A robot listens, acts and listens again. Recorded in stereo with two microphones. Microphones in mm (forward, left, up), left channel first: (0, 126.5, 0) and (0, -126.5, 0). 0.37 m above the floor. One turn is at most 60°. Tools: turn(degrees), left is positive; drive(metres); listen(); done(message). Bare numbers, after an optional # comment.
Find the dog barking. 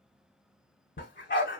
# The dog barking: about 50° left or 130° left.
turn(50)
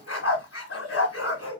# So it is at 75° left.
turn(60)
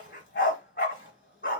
# The dog barking is now 50° left.
turn(50)
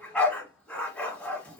done("Found it: a dog barking, straight ahead, 1 to 2 m away.")